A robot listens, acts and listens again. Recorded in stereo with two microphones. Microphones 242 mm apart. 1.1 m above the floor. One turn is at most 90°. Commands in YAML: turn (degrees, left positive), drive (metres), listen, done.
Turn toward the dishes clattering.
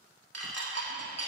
turn: -90
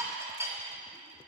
turn: -10
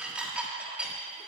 done: "Found it: dishes clattering, straight ahead, 1 to 2 m away."